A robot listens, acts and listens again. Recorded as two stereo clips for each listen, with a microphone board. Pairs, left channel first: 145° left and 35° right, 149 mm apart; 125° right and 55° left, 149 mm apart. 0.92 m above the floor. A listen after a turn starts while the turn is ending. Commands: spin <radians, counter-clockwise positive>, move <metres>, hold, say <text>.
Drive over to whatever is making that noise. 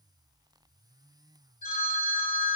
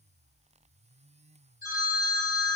spin 2.09
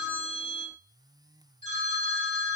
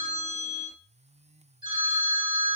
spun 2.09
move 1.0
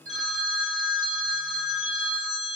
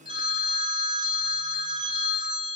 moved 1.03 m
move 1.0
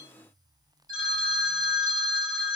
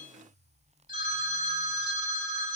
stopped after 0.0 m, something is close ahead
say I am next to the phone ringing.